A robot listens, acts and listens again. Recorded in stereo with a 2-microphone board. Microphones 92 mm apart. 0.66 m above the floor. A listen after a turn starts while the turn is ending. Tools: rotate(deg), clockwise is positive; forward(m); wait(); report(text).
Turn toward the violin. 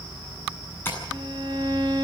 rotate(55)
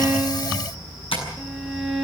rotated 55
report("Facing the violin, 2 to 4 m away.")